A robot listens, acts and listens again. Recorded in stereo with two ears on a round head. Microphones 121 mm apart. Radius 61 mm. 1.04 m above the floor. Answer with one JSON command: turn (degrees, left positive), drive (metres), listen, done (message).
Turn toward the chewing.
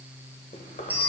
{"turn": 60}
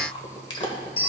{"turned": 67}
{"turn": 40}
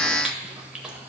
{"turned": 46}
{"done": "Facing the chewing."}